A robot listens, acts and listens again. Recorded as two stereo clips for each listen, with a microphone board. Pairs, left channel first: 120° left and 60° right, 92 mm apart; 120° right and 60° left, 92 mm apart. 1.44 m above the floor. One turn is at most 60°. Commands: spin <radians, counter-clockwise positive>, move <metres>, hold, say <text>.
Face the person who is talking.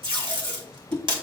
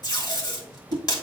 hold
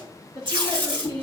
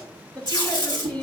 spin -0.79
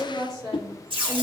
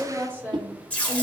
spin -0.17
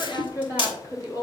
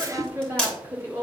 say Found it: a woman speaking, straight ahead, 2 to 4 m away.